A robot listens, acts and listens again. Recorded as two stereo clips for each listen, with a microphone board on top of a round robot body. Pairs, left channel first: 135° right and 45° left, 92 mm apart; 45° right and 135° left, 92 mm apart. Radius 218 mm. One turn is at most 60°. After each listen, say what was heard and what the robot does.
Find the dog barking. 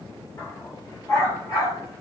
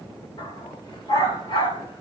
The dog barking: 90° right. Turn 60° right.
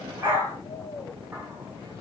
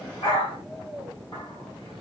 The dog barking is now 15° right. Turn 15° right.
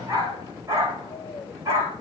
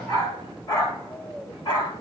The dog barking is now 15° right. Turn 15° right.
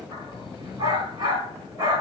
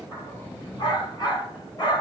Found it: a dog barking, straight ahead.